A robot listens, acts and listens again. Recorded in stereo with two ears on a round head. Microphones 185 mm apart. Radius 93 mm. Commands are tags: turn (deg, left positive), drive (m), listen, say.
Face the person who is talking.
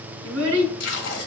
<turn deg="-70"/>
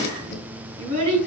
<turn deg="-40"/>
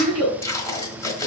<say>Found it: a child speaking, straight ahead.</say>